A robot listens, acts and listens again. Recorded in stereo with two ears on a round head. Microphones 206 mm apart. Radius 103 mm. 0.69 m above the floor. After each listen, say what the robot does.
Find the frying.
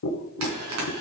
Turn 90° right.
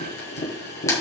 Keep listening.
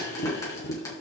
Keep listening.
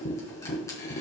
I heard frying from this way, but can't make it out now.